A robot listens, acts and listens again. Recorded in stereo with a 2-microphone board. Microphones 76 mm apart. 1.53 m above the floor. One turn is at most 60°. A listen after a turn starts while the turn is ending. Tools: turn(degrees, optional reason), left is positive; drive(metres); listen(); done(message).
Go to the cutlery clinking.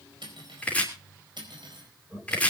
turn(degrees=-60)
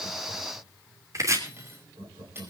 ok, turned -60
turn(degrees=-30, reason="So it is at 30° right.")
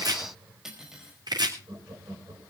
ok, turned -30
drive(metres=1.0)
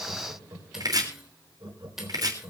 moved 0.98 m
drive(metres=1.0)
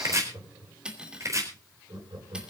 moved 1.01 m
turn(degrees=-10, reason="The cutlery clinking is now 10° right.")
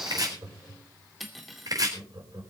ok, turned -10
drive(metres=1.0)
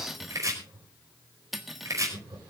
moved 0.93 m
drive(metres=1.0)
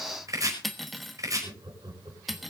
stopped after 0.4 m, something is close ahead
done("Arrived at the cutlery clinking, straight ahead.")